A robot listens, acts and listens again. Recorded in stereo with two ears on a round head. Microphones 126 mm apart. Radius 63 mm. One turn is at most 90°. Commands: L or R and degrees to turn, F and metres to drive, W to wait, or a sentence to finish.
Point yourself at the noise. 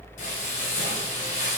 L60
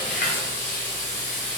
L55
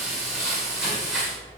Found it: frying, straight ahead, 1 to 2 m away.